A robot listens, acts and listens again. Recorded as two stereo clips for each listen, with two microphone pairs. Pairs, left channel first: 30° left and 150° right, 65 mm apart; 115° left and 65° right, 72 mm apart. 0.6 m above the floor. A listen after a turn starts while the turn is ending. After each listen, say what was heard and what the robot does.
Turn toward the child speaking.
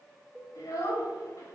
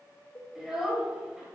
The child speaking: 20° left. Turn 20° left.
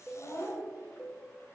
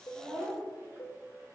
The child speaking is now 10° right. Turn 10° right.
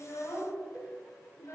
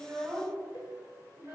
Found it: a child speaking, straight ahead.